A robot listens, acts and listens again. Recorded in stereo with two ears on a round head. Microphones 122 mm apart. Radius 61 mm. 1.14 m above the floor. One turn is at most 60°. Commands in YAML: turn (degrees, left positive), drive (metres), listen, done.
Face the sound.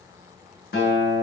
turn: 60
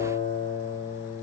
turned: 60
turn: 25
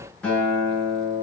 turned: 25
turn: 10
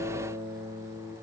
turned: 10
done: "Facing the guitar, over 4 m away."